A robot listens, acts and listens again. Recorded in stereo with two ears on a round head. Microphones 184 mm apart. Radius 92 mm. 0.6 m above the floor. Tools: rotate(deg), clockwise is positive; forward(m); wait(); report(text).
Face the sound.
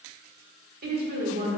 rotate(55)
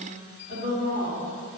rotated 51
rotate(35)
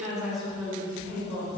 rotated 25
rotate(-10)
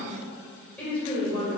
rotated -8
rotate(-10)
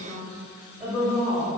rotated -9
report("Facing the woman speaking.")